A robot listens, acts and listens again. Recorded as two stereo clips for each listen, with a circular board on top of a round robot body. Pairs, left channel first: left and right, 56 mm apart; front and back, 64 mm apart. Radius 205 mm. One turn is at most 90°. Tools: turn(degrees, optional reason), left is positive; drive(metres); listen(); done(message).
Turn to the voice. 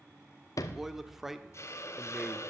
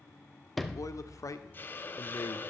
done("Facing the man speaking.")